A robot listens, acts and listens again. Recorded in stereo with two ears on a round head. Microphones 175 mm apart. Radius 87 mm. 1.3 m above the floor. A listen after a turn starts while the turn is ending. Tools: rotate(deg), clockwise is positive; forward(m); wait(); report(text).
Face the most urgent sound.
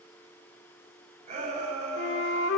rotate(40)
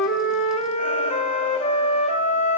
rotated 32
wait()
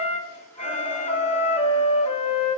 wait()
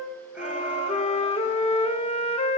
report("I heard a shout, but can't make it out now. It was about 5° right or 110° right.")